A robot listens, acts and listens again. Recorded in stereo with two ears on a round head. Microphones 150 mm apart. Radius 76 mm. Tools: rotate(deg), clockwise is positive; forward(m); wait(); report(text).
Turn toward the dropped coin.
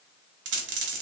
rotate(90)
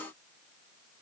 report("I heard a dropped coin from this way, but can't make it out now.")